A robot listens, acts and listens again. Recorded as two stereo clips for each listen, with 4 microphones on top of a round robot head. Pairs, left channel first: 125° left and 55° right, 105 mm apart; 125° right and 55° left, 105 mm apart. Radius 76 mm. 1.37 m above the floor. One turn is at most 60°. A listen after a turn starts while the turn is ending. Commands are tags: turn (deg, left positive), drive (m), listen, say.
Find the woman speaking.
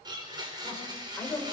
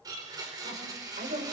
<turn deg="45"/>
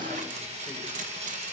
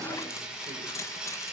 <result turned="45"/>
<listen/>
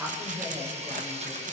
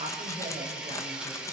<listen/>
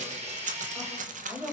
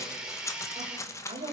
<turn deg="10"/>
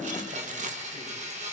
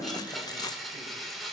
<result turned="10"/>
<listen/>
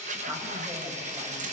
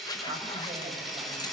<listen/>
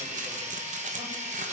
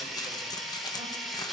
<say>I heard a woman speaking from this way, but can't make it out now.</say>